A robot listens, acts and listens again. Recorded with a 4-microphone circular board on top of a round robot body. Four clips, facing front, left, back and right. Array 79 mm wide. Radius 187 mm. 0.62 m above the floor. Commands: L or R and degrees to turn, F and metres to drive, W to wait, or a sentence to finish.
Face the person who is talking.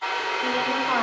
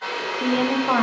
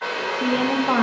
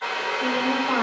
L140
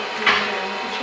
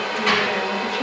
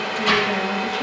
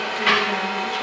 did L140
W
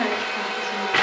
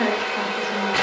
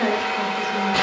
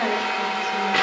L40
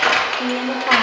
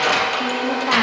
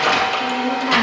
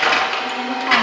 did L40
W
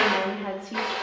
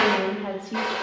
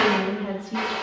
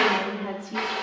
L15
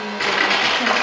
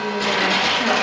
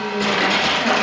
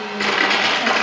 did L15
W
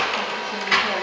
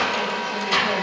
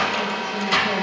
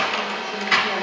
W
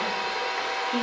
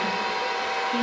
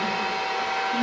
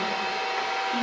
I heard a woman speaking from this way, but can't make it out now.